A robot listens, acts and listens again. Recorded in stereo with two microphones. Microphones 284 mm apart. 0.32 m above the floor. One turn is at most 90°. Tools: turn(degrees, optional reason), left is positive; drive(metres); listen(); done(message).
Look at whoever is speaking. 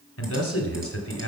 turn(degrees=55, reason="The man speaking: about 55° left or 125° left.")
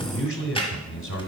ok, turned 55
turn(degrees=55, reason="So it is at 55° left.")
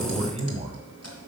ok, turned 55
turn(degrees=-25, reason="The man speaking is now 25° right.")
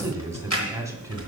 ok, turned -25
turn(degrees=-10, reason="The man speaking is now 10° right.")
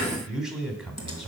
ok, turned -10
done("Facing the man speaking.")